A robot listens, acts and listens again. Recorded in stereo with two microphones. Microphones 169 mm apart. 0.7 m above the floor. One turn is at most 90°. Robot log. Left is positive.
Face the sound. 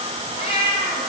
note: The cat meowing: about 30° left or 150° left.
cmd yaw +30
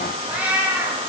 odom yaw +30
note: So it is at 15° right.
cmd yaw -15
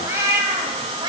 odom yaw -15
note: The cat meowing is now 30° right.
cmd yaw -30
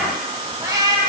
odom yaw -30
note: The cat meowing is now 25° right.
cmd yaw -25
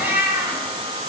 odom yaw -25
note: The cat meowing is now 15° right.
cmd yaw -15
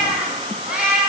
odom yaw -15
end: Found it: a cat meowing, straight ahead.